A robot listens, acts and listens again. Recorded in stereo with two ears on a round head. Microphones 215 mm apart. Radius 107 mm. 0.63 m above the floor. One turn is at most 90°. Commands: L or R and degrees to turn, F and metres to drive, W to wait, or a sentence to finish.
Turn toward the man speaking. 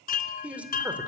R30
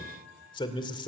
L25
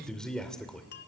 Facing the man speaking.